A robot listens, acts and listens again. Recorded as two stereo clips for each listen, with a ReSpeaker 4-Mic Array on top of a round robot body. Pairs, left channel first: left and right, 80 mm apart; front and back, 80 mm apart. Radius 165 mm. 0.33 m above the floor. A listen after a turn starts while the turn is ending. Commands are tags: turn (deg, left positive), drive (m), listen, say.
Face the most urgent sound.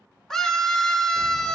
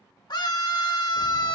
<say>Found it: a scream, straight ahead.</say>